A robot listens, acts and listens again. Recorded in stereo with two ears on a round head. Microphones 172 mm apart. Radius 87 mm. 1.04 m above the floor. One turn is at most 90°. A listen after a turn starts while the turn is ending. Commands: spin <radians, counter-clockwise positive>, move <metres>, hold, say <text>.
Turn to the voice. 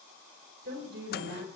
spin -0.96
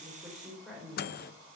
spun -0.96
say Found it: a woman speaking, straight ahead, over 4 m away.